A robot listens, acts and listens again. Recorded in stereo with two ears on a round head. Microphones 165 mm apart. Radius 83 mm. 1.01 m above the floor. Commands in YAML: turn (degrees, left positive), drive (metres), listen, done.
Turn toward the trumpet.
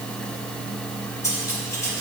listen: true
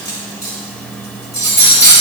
listen: true
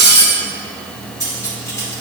done: "I can't make out a trumpet to turn to."